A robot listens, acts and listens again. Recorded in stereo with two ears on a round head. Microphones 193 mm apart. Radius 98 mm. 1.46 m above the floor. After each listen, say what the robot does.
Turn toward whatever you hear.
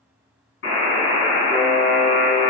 Turn 55° left.
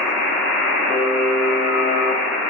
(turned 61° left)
Turn 65° left.
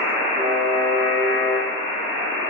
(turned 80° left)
Turn 15° right.
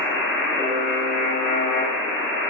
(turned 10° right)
Found it: a buzzer, straight ahead.